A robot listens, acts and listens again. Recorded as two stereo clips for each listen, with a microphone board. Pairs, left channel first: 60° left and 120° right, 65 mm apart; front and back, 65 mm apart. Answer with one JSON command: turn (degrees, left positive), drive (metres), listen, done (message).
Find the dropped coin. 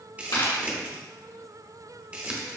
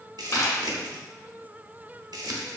{"turn": 50}
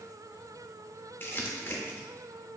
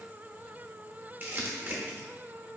{"done": "I heard a dropped coin from this way, but can't make it out now."}